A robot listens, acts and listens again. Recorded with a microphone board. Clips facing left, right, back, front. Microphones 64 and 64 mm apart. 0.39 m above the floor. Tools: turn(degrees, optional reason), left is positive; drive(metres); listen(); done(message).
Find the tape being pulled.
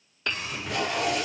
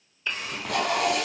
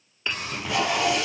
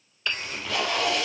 turn(degrees=-110, reason="The tape being pulled: 110° right.")
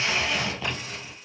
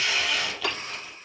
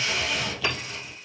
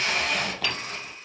turn(degrees=25, reason="The tape being pulled is now 25° left.")
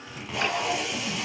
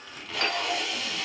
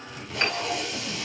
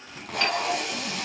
turn(degrees=15, reason="The tape being pulled is now 15° left.")
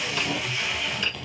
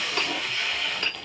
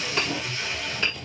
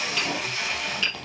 done("Found it: tape being pulled, straight ahead, 2 to 4 m away.")